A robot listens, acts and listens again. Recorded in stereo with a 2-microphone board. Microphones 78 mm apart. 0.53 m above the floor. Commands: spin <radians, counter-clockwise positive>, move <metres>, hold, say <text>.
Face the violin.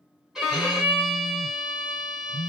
spin -0.52
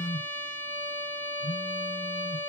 spin 0.44
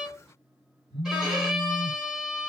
say Facing the violin, 1 to 2 m away.